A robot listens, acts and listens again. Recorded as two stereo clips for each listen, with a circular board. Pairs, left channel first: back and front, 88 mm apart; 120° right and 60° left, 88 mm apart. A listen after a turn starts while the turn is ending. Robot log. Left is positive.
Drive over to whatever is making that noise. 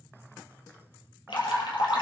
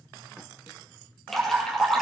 note: The dripping: 155° left.
cmd yaw +155
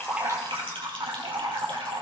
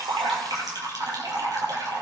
note: The dripping is now 20° left.
cmd yaw +20
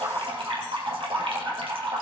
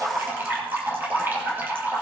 cmd fwd 1.0
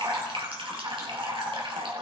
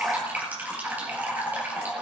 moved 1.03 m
note: The dripping is now 10° right.
cmd yaw -10
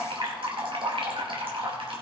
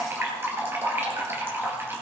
cmd fwd 1.0
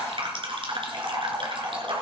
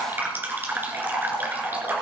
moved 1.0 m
cmd fwd 1.0
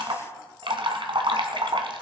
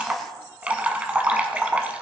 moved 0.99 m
note: The dripping is now 15° right.
cmd yaw -15
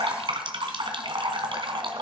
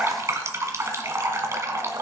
cmd fwd 1.0
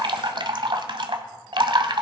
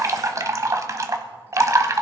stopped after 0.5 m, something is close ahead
note: The dripping is now 10° left.
cmd yaw +10
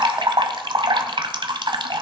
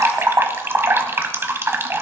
end: Arrived at the dripping, straight ahead.